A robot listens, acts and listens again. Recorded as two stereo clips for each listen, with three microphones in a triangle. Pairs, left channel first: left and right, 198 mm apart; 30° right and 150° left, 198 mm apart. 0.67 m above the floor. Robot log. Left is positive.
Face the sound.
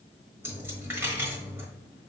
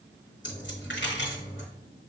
note: The dropped coin: 10° right.
cmd yaw -10
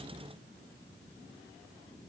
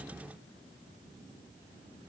end: Facing where the dropped coin came from. I can't hear it now.